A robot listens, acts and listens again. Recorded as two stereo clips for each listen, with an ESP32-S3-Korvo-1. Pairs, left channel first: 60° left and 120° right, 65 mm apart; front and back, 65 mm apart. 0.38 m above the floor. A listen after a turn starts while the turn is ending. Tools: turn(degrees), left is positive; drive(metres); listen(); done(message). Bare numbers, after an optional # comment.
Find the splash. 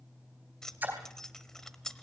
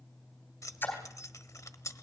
# The splash: 60° right.
turn(-60)
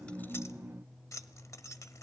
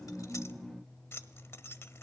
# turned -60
done("Facing where the splash came from. I can't hear it now.")